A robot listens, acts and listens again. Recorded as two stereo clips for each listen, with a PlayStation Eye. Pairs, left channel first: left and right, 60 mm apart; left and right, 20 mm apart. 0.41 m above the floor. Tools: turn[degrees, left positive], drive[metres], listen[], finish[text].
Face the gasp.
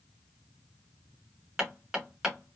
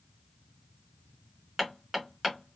Action: listen[]
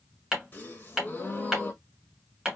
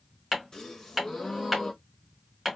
Thought: The gasp: about 30° left or 150° left.
Action: turn[30]
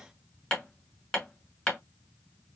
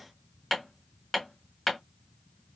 Action: listen[]
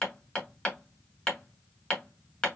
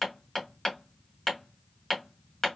Action: finish[I heard a gasp, but can't make it out now. It was about straight ahead or 120° left.]